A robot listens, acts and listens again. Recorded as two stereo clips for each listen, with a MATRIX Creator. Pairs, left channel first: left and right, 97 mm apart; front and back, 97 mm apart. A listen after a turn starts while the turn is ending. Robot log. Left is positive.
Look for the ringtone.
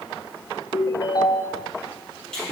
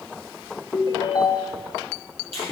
note: The ringtone: 45° left.
cmd yaw +45
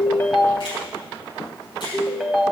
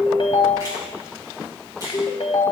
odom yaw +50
end: Found it: a ringtone, straight ahead, 1 to 2 m away.